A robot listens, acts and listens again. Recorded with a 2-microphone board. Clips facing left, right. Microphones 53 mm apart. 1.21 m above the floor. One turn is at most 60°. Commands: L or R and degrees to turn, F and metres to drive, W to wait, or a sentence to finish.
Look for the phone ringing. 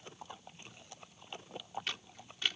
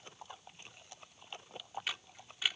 W
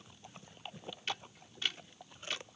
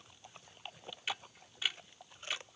W
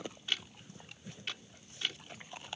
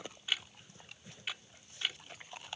I can't make out a phone ringing to turn to.